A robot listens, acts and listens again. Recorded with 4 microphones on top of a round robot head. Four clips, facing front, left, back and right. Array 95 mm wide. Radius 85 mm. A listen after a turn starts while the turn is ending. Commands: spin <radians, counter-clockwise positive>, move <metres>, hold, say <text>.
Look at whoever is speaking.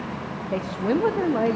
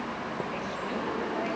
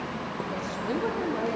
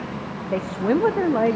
spin -1.13
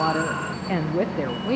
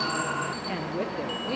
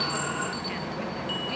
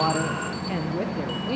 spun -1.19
say Facing the woman speaking, under 1 m away.